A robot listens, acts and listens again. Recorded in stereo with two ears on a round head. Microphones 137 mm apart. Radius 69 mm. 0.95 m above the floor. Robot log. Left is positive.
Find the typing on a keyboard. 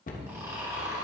cmd idle
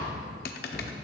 note: The typing on a keyboard: about 70° left or 110° left.
cmd yaw +70
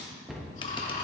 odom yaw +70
cmd idle
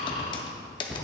note: So it is at 35° left.
cmd yaw +35
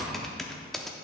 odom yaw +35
end: Found it: typing on a keyboard, straight ahead.